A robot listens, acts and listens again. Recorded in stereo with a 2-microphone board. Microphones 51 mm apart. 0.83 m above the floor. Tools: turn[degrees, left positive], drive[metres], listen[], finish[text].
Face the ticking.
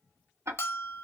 Thought: The ticking: about 65° right or 115° right.
Action: turn[-65]
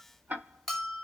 Thought: So it is at 35° right.
Action: turn[-35]
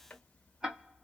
Thought: The ticking is now 15° right.
Action: turn[-15]
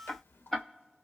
Action: finish[Found it: ticking, straight ahead, under 1 m away.]